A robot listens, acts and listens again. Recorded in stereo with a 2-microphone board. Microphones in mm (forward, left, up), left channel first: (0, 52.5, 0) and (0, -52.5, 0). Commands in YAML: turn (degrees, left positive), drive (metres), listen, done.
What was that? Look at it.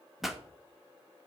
turn: -30
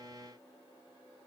listen: true
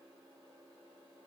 done: "I heard a pop, but can't make it out now. It was about 25° left or 145° right."